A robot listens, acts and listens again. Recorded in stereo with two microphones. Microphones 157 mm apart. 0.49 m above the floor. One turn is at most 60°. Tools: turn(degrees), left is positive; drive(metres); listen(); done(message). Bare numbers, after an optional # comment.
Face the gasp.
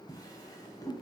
listen()
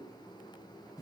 listen()
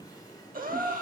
# The gasp: about 65° right or 115° right.
turn(-60)
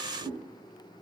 listen()
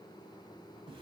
done("I heard a gasp, but can't make it out now. It was about 5° right or 55° right.")